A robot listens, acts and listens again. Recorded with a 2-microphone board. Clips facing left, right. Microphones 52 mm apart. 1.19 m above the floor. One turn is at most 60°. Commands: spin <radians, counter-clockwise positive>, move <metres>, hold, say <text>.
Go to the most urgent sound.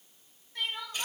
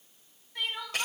spin -0.52
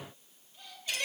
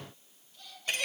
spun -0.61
hold
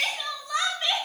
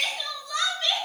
spin 0.52
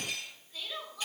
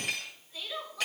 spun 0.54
move 1.0
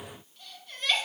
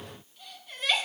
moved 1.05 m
spin -0.17
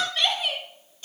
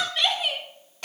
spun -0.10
move 1.0
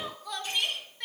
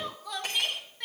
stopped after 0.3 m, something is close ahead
say I am next to the crying.